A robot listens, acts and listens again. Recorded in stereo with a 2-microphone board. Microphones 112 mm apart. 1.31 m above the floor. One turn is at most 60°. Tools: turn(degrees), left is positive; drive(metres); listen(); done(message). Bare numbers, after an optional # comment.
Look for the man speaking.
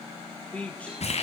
turn(30)
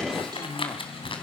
# So it is at 140° left.
turn(60)
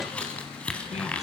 # Nothing new. It was at 80° left.
turn(60)
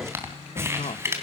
# The man speaking is now 80° left.
turn(60)
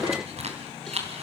# Nothing new. It was at 20° left.
turn(20)
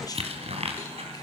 listen()
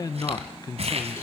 # The man speaking is now 35° left.
turn(35)
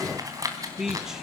done("Found it: a man speaking, straight ahead.")